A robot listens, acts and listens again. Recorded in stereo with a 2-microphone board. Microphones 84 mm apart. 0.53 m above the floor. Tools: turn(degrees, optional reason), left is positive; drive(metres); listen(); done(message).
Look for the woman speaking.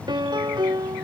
listen()
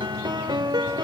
listen()
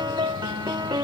done("I can't make out a woman speaking to turn to.")